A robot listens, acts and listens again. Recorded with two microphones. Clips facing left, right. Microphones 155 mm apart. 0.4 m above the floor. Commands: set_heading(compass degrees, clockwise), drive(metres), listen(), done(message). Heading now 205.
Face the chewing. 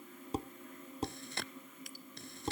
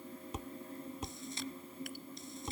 set_heading(135)
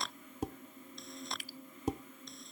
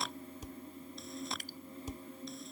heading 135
done("Facing the chewing.")